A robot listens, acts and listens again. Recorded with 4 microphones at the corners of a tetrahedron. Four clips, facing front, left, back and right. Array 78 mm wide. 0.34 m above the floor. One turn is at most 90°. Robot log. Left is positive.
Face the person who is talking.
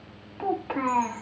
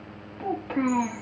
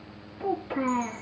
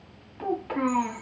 end: Facing the child speaking, 1 to 2 m away.